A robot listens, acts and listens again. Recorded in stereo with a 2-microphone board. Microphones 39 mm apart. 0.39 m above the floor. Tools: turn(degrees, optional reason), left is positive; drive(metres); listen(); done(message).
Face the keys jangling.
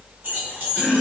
turn(degrees=-60, reason="The keys jangling: about 60° right or 120° right.")
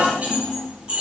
turn(degrees=-30, reason="So it is at 30° right.")
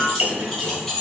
turn(degrees=10, reason="The keys jangling is now 10° left.")
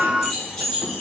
done("Facing the keys jangling, 2 to 4 m away.")